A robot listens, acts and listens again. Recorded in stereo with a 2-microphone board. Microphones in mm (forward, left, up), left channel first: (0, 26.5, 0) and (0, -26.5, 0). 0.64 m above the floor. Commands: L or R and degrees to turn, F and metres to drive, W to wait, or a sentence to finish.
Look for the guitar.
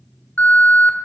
W
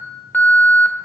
W
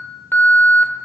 I can't make out a guitar, only an alarm.